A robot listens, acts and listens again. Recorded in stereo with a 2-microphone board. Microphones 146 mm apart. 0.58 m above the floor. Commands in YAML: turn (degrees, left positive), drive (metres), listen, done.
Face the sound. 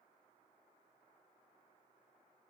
listen: true
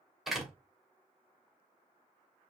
turn: 30
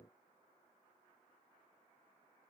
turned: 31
listen: true
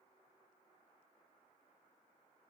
done: "I heard a door slam, but can't make it out now. It was about 35° right or 150° left."